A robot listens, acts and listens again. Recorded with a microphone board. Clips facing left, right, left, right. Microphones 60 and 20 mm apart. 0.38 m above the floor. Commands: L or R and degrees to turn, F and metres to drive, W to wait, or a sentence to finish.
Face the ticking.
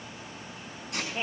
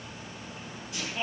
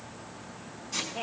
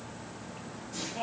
W
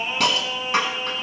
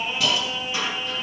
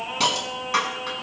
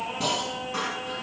W
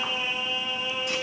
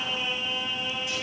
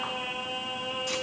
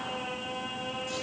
I can't make out ticking to turn to.